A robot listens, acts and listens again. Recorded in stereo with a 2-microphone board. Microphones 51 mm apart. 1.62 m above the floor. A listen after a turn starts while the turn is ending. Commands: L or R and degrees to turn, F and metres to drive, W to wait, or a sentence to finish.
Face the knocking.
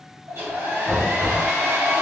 L30
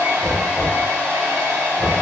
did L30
R20
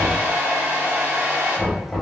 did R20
Found it: knocking, straight ahead.